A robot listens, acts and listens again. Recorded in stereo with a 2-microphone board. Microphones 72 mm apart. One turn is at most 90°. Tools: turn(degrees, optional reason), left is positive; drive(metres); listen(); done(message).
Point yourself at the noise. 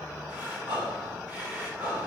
turn(degrees=-30, reason="The breathing: about 30° right or 150° right.")
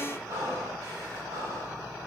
turn(degrees=-90, reason="So it is at 120° right.")
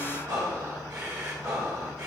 turn(degrees=-60, reason="The breathing is now 60° right.")
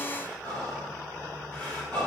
turn(degrees=20, reason="The breathing is now 20° left.")
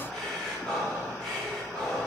turn(degrees=10, reason="The breathing is now 10° left.")
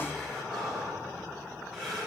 done("Facing the breathing, 2 to 4 m away.")